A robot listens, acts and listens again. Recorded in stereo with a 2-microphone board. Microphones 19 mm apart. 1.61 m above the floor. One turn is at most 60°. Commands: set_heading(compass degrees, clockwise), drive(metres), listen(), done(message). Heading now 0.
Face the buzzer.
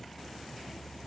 listen()
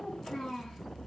listen()
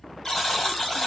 set_heading(330)
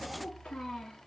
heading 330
listen()
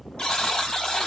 set_heading(270)
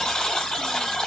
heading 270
set_heading(210)
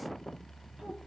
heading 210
set_heading(200)
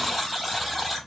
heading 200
done("Found it: a buzzer, straight ahead, 2 to 4 m away.")